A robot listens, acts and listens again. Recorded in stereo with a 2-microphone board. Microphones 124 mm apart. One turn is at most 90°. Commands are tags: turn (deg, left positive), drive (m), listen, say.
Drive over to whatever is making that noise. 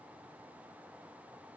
<listen/>
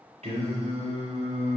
<turn deg="-50"/>
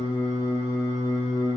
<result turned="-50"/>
<turn deg="-80"/>
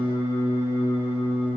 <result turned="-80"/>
<turn deg="-25"/>
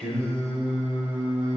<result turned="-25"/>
<drive m="1.0"/>
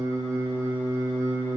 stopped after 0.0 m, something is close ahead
<say>Blocked. The singing is further on, straight ahead.</say>